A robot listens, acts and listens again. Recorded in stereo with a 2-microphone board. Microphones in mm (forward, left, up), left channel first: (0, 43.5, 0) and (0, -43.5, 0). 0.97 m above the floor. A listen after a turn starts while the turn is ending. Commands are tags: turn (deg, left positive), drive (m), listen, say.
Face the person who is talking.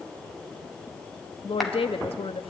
<turn deg="90"/>
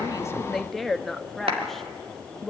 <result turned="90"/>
<say>Facing the woman speaking.</say>